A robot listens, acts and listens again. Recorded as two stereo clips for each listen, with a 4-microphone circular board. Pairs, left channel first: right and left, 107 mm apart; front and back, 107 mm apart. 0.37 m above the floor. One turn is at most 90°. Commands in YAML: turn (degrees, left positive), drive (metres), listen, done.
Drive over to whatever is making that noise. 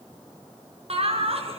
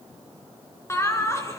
turn: 65
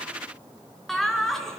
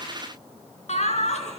drive: 1.0
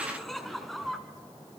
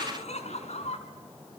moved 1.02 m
drive: 1.0
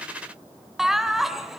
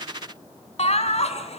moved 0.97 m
drive: 1.0
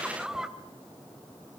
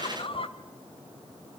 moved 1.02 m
drive: 1.0
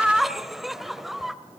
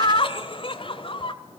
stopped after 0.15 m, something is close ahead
done: "I am next to the laughter."